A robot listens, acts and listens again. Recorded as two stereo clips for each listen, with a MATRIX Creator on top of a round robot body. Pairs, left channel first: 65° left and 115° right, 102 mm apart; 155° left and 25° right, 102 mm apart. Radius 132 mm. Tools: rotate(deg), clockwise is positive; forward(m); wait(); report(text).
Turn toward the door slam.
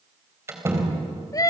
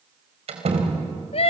rotate(45)
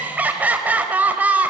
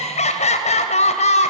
report("I heard a door slam from this way, but can't make it out now.")